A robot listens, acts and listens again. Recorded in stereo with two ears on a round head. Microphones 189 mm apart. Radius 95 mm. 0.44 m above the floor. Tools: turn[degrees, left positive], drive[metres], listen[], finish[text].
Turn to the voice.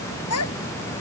Action: turn[90]
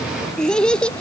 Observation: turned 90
Action: finish[Facing the child speaking.]